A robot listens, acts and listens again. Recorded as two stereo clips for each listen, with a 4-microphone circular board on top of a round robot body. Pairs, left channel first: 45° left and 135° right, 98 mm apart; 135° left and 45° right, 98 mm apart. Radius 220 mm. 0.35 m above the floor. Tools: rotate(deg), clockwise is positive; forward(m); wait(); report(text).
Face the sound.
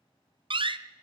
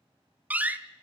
rotate(120)
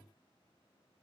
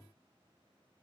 report("I heard a door slam from this way, but can't make it out now.")